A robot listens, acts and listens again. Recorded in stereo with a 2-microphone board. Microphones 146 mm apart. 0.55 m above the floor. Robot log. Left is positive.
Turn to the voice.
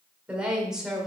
cmd yaw +30
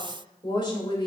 note: So it is at 145° left.
cmd yaw +145
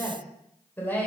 note: The woman speaking is now 10° left.
cmd yaw +10
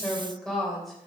end: Found it: a woman speaking, straight ahead, 2 to 4 m away.